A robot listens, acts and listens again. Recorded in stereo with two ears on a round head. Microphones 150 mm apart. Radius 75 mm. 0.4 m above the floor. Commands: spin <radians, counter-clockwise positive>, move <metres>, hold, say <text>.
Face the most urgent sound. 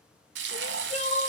spin 0.70
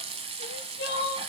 spin 1.75
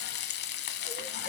hold
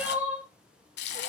spin -0.17
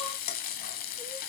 hold
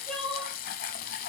say Facing the crying, 1 to 2 m away.